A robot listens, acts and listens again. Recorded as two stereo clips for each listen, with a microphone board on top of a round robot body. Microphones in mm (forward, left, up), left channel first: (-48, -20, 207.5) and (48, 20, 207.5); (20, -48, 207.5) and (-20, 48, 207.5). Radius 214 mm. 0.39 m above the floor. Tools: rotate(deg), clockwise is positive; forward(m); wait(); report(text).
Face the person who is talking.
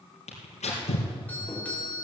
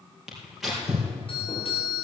wait()
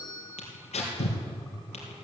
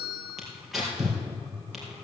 wait()
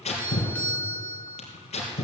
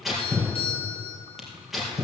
report("I can't make out anyone speaking, only tearing paper and a doorbell.")